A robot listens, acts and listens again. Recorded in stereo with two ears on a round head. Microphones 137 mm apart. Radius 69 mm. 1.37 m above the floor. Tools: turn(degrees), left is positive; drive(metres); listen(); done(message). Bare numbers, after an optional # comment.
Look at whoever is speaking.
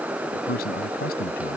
# The man speaking: about 70° left or 110° left.
turn(70)
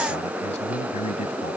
# So it is at 40° left.
turn(40)
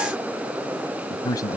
# The man speaking is now 25° left.
turn(25)
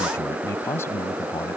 # The man speaking is now 15° left.
turn(15)
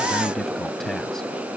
done("Facing the man speaking.")